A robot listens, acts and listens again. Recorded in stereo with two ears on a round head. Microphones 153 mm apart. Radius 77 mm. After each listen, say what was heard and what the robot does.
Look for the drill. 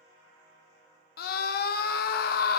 Keep listening.
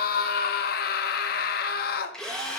Turn 30° left.
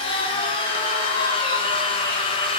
So it is at 145° left. Turn 145° left.
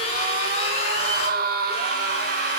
The drill is now 45° left. Turn 45° left.
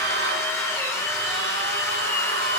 The drill is now 20° left. Turn 20° left.
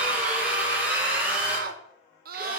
The drill is now 10° right. Turn 10° right.
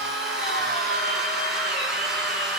Facing the drill, 1 to 2 m away.